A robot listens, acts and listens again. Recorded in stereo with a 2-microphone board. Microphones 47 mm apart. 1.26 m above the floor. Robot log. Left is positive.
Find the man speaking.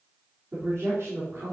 cmd yaw -90
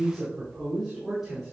note: So it is at 10° right.
cmd yaw -10
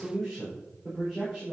note: The man speaking is now 10° right.
cmd yaw -10
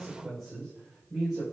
end: Found it: a man speaking, straight ahead, over 4 m away.